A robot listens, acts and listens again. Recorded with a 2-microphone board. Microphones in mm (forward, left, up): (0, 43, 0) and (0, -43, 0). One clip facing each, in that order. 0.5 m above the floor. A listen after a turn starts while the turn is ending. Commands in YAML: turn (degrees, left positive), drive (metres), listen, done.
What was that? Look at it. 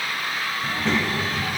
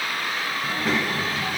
turn: -30
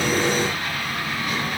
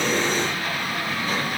turn: -145
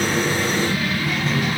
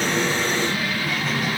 done: "Facing the child speaking, 1 to 2 m away."